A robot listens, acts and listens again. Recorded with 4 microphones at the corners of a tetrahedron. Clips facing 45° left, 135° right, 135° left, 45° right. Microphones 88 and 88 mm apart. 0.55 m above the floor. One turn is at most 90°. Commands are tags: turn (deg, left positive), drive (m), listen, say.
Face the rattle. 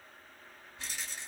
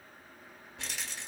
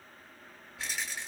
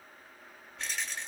<turn deg="-90"/>
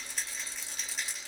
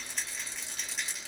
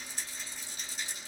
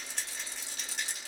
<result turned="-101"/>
<turn deg="-45"/>
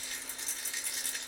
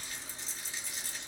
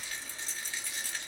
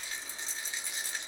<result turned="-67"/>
<turn deg="25"/>
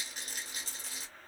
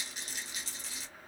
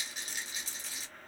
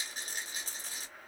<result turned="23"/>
<say>Facing the rattle.</say>